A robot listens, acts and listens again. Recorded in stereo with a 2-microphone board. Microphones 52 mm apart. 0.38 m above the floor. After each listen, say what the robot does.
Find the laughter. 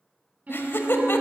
Turn 50° left.
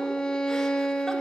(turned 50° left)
Keep listening.
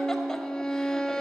Keep listening.
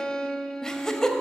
Turn 15° left.
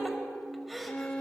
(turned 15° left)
Facing the laughter, 1 to 2 m away.